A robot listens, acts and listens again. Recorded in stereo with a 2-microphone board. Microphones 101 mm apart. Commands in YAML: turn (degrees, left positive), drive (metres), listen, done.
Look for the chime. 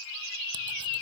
listen: true
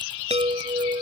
turn: -90
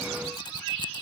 listen: true
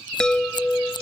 done: "Facing the chime."